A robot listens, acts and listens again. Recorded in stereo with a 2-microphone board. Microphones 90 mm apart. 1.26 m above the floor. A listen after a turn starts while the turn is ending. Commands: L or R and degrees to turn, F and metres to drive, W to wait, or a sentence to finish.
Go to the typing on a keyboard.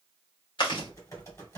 L30
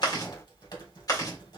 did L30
L115
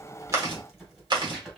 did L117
F1.0
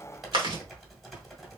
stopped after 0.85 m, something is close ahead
I am next to the typing on a keyboard.